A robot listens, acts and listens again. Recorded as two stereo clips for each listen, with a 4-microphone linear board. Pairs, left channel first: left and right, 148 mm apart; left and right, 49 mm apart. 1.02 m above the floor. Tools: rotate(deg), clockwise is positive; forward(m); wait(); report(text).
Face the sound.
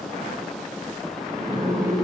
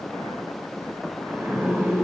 rotate(70)
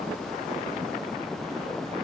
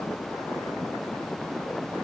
wait()
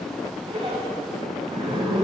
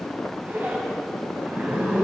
rotate(35)
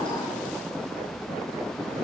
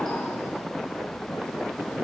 wait()
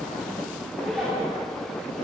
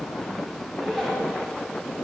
report("Facing the zipper, 2 to 4 m away.")